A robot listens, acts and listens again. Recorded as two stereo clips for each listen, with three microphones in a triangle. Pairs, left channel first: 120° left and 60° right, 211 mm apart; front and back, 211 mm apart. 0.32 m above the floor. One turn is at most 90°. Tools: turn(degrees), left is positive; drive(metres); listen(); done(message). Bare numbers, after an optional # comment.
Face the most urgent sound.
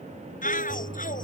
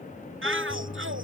# The shout: 170° left.
turn(90)
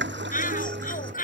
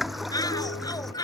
# The shout is now 70° left.
turn(70)
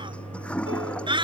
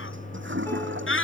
done("Found it: a shout, straight ahead.")